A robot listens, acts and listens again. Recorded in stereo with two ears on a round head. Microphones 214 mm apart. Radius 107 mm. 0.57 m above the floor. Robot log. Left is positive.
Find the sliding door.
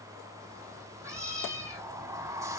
cmd yaw -30
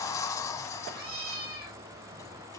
note: So it is at 15° left.
cmd yaw +15
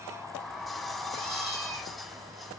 end: Facing the sliding door, under 1 m away.